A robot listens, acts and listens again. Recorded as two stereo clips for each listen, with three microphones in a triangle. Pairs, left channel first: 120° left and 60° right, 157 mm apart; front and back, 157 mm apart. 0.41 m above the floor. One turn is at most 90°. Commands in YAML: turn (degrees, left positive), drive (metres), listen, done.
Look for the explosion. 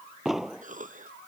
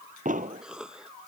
turn: -90
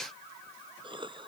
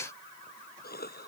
turn: -60
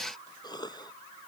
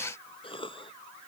done: "Facing where the explosion came from. I can't hear it now."